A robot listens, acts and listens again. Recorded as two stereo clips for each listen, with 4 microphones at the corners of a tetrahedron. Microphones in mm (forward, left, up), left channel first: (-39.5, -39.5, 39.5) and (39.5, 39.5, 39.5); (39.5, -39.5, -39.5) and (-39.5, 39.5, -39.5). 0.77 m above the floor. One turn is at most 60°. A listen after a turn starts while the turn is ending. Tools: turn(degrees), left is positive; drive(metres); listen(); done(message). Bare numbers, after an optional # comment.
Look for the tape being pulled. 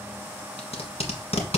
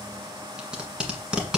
# The tape being pulled: 145° right.
turn(-60)
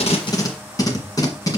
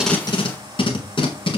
# The tape being pulled is now 80° right.
turn(-60)
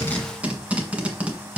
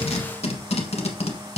# The tape being pulled is now 35° right.
turn(-35)
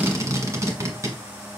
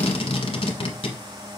# The tape being pulled is now 15° right.
turn(-15)
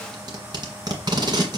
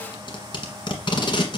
done("Found it: tape being pulled, straight ahead, 1 to 2 m away.")